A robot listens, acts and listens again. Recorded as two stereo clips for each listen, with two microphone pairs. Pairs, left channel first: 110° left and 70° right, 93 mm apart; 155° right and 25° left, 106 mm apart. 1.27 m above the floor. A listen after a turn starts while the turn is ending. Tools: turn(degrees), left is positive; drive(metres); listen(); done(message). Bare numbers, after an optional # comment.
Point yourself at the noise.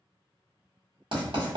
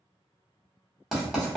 # The writing: 70° right.
turn(-70)
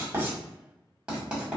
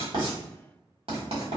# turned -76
done("Facing the writing.")